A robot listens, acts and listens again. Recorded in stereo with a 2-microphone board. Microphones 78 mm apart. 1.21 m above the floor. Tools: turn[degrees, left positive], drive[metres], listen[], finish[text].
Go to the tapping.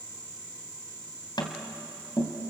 Thought: The tapping: about 65° left or 115° left.
Action: turn[65]
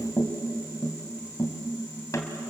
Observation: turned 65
Thought: So it is at 45° left.
Action: turn[45]
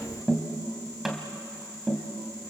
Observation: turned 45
Action: drive[1.0]
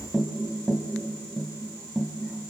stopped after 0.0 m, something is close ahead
Action: finish[Something is in my way. I am facing the tapping but have not reached it.]